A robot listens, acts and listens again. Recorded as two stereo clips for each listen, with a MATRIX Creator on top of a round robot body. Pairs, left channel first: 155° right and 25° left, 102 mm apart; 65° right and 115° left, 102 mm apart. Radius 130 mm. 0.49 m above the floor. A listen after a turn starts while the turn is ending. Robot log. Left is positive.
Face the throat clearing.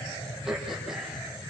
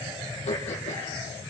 note: The throat clearing: 65° right.
cmd yaw -65
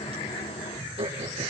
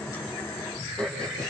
note: The throat clearing is now 10° left.
cmd yaw +10
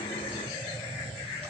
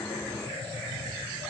cmd idle
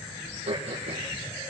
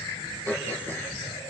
end: Found it: throat clearing, straight ahead, over 4 m away.